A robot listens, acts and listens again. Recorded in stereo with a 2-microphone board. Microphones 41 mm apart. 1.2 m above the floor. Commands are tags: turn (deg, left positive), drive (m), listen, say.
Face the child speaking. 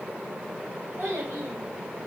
<turn deg="-65"/>
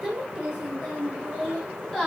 <turn deg="10"/>
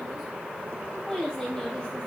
<turn deg="15"/>
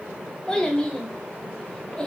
<turn deg="15"/>
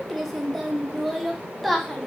<say>Facing the child speaking, 1 to 2 m away.</say>